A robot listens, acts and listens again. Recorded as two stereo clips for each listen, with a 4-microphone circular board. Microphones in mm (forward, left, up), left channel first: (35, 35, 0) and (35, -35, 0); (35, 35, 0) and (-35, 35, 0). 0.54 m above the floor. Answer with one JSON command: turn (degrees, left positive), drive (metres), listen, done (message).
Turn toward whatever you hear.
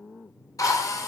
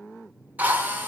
{"turn": 115}
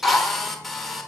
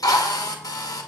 {"done": "Found it: a drill, straight ahead."}